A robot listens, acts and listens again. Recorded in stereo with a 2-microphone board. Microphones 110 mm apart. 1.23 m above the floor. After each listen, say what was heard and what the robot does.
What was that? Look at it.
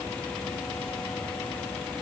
Keep listening.
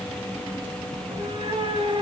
The cat meowing: about 70° right or 110° right. Turn 70° right.
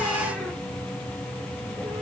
Keep listening.
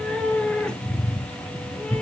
So it is at 10° left. Turn 10° left.
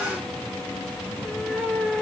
Found it: a cat meowing, straight ahead.